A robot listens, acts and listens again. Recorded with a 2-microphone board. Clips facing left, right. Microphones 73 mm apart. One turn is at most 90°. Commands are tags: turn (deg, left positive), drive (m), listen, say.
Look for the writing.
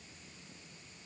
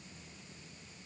<listen/>
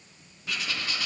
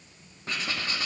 <turn deg="-35"/>
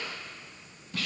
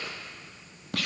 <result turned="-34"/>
<turn deg="-90"/>
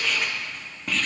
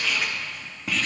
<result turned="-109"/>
<say>Facing the writing, 1 to 2 m away.</say>